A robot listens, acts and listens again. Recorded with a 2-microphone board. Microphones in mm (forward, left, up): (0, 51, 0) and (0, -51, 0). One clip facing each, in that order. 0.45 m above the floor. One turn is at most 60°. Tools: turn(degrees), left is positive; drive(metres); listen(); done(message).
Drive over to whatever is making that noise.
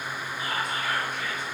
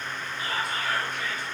turn(degrees=35)
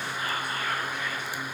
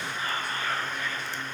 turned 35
turn(degrees=10)
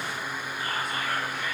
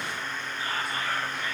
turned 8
drive(metres=1.0)
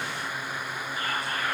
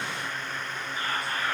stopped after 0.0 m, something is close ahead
done("Something is in my way. I am facing the whispering but have not reached it.")